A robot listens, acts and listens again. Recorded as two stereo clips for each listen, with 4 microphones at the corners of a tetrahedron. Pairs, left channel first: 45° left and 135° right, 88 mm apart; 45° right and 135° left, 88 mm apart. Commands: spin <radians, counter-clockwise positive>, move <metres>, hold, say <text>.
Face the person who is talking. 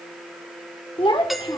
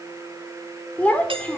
spin 0.44
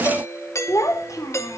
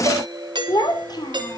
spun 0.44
spin -0.17
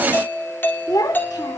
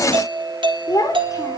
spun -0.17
say Facing the child speaking, 2 to 4 m away.